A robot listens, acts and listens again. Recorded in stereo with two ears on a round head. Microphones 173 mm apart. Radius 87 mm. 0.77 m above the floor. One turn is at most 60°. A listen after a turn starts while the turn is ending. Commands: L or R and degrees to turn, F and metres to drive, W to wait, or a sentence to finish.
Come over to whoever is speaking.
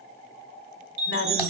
L60
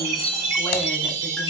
W
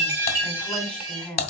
F1.0
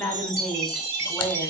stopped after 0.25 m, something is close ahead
Blocked. The woman speaking is further on, straight ahead.